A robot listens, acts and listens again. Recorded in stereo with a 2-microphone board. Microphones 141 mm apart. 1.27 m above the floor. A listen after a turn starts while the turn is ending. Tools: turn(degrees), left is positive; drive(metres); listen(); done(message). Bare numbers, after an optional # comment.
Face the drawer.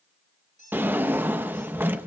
turn(-30)
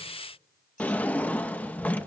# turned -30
# So it is at 10° left.
turn(10)
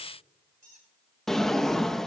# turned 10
done("Facing the drawer.")